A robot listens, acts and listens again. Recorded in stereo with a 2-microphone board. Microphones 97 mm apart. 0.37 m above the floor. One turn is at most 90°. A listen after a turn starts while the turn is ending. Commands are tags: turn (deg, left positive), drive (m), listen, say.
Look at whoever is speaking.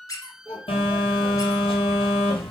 <turn deg="-20"/>
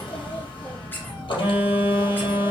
<listen/>
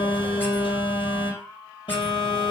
<listen/>
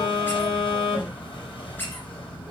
<say>I heard a child speaking, but can't make it out now. It was about straight ahead or 140° right.</say>